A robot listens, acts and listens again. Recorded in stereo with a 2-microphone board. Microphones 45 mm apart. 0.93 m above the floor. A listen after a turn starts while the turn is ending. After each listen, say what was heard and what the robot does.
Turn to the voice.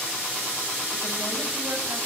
Keep listening.
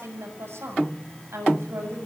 The woman speaking: about 70° right or 110° right. Turn 70° right.
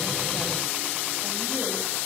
Keep listening.
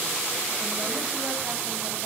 Keep listening.
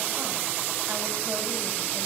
I heard a woman speaking, but can't make it out now. It was about straight ahead or 40° right.